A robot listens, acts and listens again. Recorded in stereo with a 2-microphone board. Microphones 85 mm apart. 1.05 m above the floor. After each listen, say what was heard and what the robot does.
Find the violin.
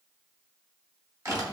Keep listening.
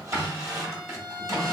The violin: about 55° right or 125° right. Turn 55° right.
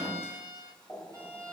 So it is at 55° right. Turn 55° right.
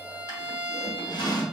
Facing the violin, 1 to 2 m away.